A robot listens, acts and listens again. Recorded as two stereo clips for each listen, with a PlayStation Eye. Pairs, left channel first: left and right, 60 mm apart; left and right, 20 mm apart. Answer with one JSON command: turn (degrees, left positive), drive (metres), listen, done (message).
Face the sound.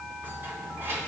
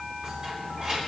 {"turn": -40}
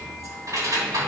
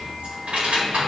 {"turn": -95}
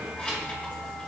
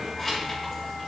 {"turn": 20}
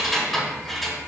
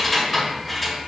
{"done": "Facing the keys jangling, 2 to 4 m away."}